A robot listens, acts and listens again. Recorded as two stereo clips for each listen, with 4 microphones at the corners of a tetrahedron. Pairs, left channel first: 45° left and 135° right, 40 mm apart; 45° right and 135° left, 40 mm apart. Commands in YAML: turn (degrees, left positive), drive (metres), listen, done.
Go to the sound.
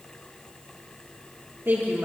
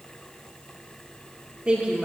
turn: -165
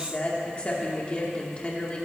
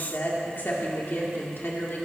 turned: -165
turn: -15
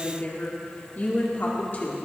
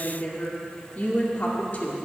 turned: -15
drive: 1.0
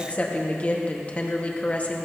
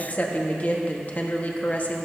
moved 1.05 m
drive: 1.0
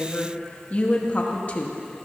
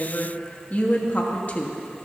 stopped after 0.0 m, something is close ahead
done: "Arrived at the woman speaking, straight ahead."